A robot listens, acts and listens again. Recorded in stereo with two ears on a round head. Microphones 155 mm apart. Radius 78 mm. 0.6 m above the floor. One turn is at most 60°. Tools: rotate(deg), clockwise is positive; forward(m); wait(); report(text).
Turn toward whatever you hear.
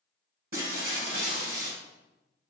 rotate(55)
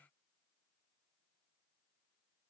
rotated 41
wait()
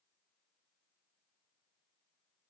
report("I heard breaking glass, but can't make it out now. It was about 15° right or 80° right.")